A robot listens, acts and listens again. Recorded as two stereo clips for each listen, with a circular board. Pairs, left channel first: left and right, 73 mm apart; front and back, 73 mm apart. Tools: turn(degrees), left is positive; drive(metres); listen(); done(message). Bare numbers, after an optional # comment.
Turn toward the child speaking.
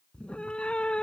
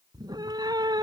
listen()
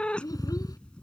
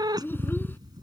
# The child speaking: 60° left.
turn(60)
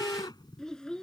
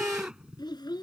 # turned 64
# The child speaking is now 10° left.
turn(10)
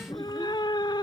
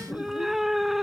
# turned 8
listen()
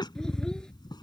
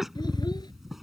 listen()
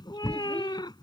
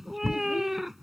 done("I heard a child speaking from this way, but can't make it out now.")